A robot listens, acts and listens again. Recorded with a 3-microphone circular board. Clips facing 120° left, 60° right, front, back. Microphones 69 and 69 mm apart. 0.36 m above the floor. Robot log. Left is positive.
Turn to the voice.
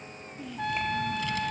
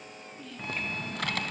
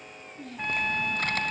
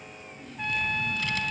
note: The child speaking: 40° left.
cmd yaw +40
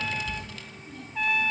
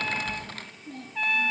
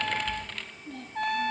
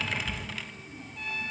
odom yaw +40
note: The child speaking is now 20° right.
cmd yaw -20
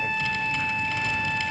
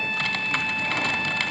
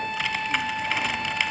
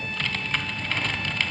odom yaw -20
cmd idle
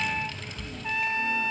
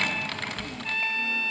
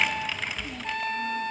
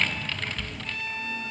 cmd idle
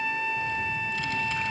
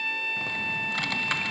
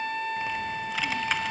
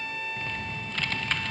end: Facing where the child speaking came from. I can't hear it now.